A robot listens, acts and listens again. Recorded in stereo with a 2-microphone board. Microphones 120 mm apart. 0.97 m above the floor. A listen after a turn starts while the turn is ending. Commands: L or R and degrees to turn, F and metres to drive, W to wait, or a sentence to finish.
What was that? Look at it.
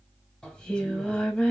L30
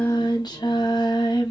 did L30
L140
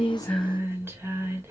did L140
R20
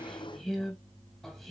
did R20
Found it: singing, straight ahead.